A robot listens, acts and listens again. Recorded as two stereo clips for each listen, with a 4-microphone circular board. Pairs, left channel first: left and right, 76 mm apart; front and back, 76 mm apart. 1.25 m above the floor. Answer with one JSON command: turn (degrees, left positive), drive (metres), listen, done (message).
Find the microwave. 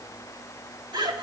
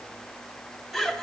{"listen": true}
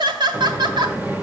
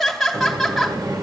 {"turn": -155}
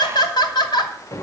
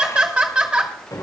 {"turn": 40}
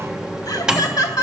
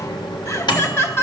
{"turn": -10}
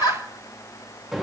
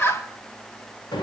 {"done": "Found it: a microwave, straight ahead."}